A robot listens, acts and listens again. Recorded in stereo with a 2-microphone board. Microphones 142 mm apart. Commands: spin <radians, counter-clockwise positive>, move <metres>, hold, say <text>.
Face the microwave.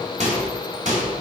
spin -0.96
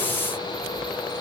hold
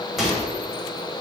say Facing the microwave, 2 to 4 m away.